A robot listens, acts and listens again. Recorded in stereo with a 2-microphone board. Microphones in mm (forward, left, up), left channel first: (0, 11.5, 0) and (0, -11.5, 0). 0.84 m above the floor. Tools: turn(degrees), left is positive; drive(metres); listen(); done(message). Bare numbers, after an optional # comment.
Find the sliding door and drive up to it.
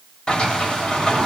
# The sliding door: about 40° left or 140° left.
turn(40)
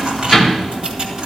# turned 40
drive(1.0)
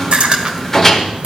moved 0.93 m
# The sliding door is now 15° left.
turn(15)
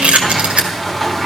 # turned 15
drive(1.0)
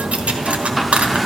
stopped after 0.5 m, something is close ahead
done("Arrived at the sliding door, straight ahead.")